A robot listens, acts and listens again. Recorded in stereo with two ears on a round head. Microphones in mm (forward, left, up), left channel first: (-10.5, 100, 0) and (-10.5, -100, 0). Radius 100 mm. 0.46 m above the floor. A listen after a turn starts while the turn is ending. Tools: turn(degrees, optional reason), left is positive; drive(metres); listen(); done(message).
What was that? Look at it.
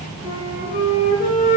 turn(degrees=40, reason="The flute: about 40° left or 140° left.")
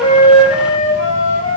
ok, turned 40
turn(degrees=100, reason="So it is at 100° left.")
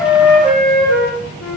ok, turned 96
done("Facing the flute.")